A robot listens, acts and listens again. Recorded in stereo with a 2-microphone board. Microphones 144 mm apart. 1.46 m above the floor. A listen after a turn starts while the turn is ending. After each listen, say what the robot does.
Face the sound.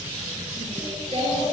Turn 45° right.
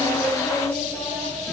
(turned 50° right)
Turn 10° left.
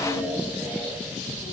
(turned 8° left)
Turn 15° left.
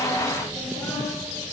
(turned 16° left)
Keep listening.
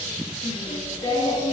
Turn 35° left.
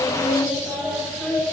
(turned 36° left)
Found it: singing, straight ahead, 2 to 4 m away.